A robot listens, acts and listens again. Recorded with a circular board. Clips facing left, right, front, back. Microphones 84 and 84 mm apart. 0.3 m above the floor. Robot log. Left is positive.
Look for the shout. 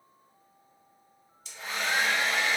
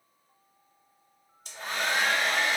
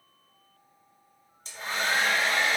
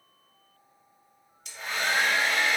cmd idle
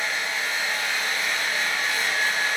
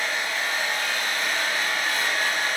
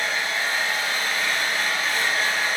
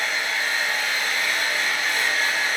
cmd idle
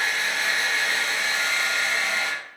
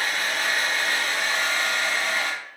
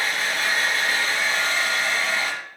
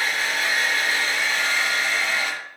end: I can't make out a shout to turn to.